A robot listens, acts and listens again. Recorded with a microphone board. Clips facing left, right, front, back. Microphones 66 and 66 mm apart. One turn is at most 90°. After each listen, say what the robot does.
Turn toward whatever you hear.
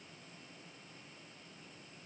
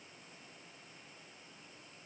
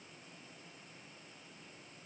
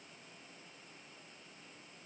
Keep listening.
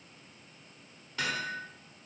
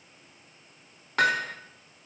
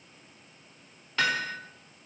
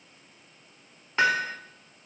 Turn 90° right.
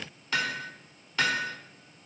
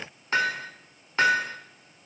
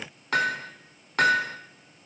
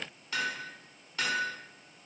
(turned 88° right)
Turn 30° right.
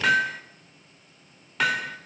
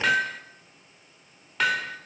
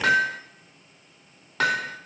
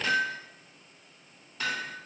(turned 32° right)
Facing the hammering.